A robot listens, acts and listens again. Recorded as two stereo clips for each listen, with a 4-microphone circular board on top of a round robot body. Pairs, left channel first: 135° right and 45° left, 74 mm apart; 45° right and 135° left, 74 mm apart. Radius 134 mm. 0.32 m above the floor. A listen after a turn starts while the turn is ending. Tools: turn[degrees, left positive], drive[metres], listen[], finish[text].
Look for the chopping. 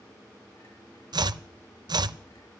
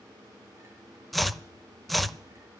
Thought: The chopping: 45° left.
Action: turn[45]
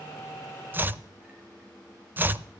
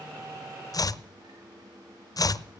Thought: The chopping is now 15° right.
Action: turn[-15]
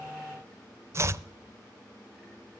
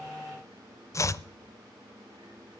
Action: finish[Found it: chopping, straight ahead.]